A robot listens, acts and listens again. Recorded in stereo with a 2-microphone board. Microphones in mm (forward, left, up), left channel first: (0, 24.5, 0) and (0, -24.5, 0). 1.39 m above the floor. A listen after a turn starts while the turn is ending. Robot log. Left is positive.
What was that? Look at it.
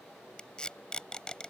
note: The tape being pulled: about 15° left or 165° left.
cmd yaw +15
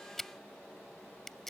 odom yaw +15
end: Found it: tape being pulled, straight ahead.